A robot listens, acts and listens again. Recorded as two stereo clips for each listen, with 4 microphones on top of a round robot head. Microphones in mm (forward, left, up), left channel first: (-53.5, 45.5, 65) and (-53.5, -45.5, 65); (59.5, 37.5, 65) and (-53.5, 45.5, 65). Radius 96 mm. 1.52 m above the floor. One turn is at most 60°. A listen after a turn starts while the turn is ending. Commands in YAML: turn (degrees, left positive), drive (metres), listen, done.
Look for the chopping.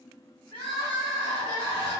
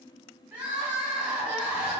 listen: true
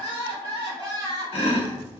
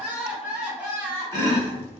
turn: 60
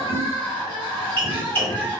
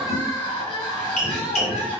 turn: 15
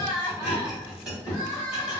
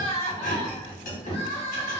done: "Found it: chopping, straight ahead."